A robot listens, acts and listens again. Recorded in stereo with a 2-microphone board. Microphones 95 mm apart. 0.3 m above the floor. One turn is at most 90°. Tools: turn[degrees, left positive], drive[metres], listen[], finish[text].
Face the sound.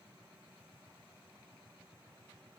Action: listen[]
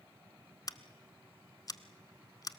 Thought: The scissors: about 40° left or 140° left.
Action: turn[40]
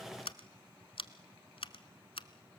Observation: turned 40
Thought: So it is at 100° left.
Action: turn[90]
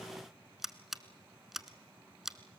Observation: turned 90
Action: finish[Found it: scissors, straight ahead, under 1 m away.]